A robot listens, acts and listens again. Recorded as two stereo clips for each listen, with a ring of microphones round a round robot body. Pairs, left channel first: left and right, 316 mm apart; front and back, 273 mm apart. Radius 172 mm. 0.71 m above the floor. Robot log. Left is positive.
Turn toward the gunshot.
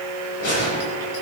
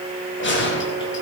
note: The gunshot: 45° left.
cmd yaw +45
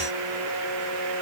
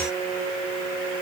end: I heard a gunshot from this way, but can't make it out now.